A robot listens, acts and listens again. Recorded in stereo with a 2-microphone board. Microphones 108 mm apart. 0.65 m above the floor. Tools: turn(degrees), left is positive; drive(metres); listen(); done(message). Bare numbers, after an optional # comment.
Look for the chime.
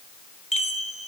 # The chime: about 75° left or 105° left.
turn(75)
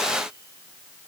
listen()
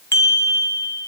# So it is at 25° left.
turn(25)
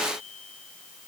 listen()
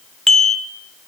done("Facing the chime.")